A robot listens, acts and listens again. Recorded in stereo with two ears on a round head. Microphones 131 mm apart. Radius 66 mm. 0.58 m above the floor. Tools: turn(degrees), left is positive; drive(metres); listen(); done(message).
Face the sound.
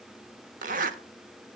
turn(degrees=-60)
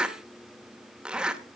done("Found it: a zipper, straight ahead, 1 to 2 m away.")